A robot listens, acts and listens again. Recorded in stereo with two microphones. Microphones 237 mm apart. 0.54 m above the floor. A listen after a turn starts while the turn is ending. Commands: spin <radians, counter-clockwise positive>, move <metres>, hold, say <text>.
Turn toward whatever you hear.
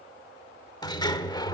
spin 0.26
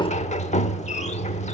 spin 2.62
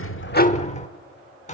spin 0.61
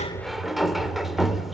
say Found it: a sliding door, straight ahead.